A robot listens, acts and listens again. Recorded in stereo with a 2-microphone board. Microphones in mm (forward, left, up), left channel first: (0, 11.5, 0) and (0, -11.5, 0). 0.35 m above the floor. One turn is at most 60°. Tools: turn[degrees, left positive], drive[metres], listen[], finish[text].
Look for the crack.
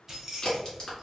Thought: The crack: about 35° left or 145° left.
Action: turn[35]
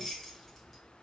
Action: listen[]
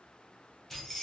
Action: finish[I heard a crack, but can't make it out now. It was about straight ahead or 110° left.]